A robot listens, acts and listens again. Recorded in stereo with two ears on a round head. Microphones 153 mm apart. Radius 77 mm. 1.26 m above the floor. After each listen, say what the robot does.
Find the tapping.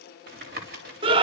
Turn 60° right.
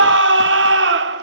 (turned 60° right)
Keep listening.
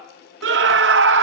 Keep listening.
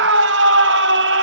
I heard tapping, but can't make it out now. It was about straight ahead or 60° right.